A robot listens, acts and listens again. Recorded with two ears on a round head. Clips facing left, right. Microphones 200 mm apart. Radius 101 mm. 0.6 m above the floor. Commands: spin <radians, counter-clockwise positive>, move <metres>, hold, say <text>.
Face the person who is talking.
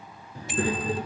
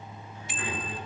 spin 0.70
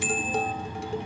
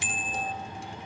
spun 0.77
hold
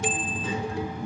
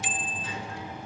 spin 1.66
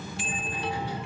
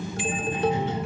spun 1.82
spin -0.35
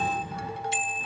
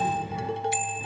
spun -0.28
spin -0.17
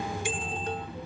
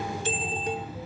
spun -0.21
say Facing the child speaking, over 4 m away.